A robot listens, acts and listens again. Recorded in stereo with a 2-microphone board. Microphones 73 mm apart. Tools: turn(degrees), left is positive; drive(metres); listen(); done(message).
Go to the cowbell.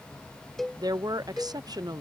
turn(degrees=30)
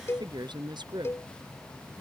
turn(degrees=145)
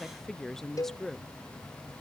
turn(degrees=55)
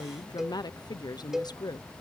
drive(metres=1.0)
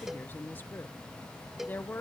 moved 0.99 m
drive(metres=1.0)
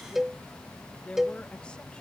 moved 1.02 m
drive(metres=1.0)
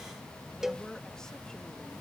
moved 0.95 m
drive(metres=1.0)
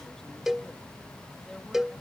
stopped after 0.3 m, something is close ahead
done("Arrived at the cowbell, straight ahead.")